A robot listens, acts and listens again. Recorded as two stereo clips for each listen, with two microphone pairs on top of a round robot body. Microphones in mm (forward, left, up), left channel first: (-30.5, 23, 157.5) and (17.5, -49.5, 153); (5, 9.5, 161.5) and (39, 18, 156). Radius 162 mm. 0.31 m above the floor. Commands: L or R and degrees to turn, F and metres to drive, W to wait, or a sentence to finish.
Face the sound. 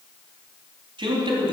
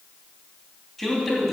R75
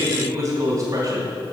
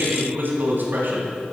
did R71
Found it: a man speaking, straight ahead, 2 to 4 m away.